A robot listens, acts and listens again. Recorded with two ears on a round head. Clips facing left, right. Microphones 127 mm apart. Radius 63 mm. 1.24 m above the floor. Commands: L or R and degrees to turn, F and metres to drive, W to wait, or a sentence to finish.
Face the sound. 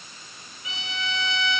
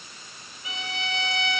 R25
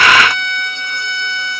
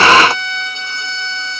Facing the violin, 2 to 4 m away.